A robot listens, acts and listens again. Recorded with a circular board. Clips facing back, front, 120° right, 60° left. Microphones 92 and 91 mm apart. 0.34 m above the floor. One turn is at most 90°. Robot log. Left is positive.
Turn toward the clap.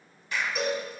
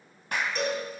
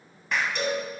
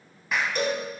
note: The clap: 25° right.
cmd yaw -25
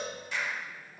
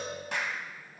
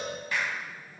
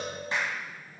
end: Facing the clap.